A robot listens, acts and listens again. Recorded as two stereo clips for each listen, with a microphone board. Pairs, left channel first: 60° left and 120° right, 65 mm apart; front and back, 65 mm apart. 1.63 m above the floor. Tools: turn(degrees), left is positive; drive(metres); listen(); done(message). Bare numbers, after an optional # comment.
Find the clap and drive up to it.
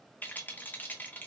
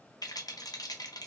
listen()
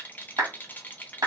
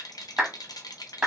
# The clap: 100° right.
turn(-100)
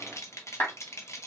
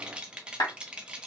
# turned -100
# The clap is now 10° left.
turn(10)
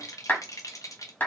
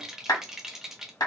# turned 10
drive(1.0)
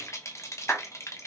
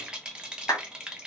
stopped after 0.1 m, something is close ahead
done("Something is in my way. I am facing the clap but have not reached it.")